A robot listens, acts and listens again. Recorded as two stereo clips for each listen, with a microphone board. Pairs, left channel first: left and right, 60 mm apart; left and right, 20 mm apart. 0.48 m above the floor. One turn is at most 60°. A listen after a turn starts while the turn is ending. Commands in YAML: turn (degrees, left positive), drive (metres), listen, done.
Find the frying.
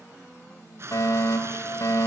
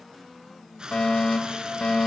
turn: -50
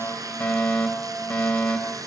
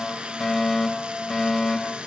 turn: -60
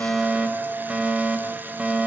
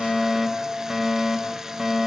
turn: -20
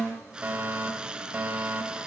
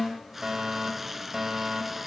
turn: -15
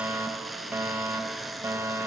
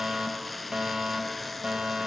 done: "Found it: frying, straight ahead."